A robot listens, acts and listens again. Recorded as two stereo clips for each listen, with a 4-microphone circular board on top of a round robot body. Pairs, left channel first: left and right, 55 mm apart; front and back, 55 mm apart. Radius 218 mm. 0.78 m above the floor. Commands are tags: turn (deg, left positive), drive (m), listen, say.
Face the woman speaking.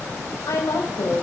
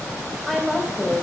<turn deg="95"/>
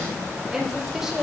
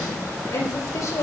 <turn deg="-10"/>
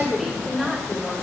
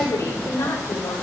<say>Found it: a woman speaking, straight ahead.</say>